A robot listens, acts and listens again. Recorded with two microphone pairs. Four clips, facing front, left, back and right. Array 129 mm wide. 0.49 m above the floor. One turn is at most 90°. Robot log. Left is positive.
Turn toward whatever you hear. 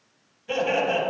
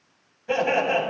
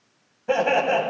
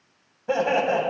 note: The laughter: 155° right.
cmd yaw -90
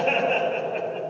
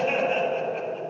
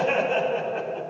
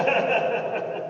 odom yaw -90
note: The laughter is now 75° right.
cmd yaw -75
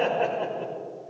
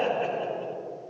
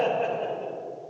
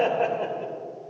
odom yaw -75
note: The laughter is now 20° right.
cmd yaw -20
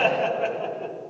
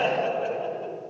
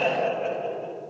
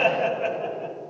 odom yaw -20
end: Found it: laughter, straight ahead.